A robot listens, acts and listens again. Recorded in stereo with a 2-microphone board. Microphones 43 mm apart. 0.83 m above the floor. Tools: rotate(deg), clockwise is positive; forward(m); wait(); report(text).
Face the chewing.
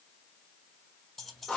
wait()
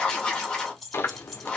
rotate(-65)
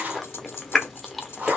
report("Found it: chewing, straight ahead.")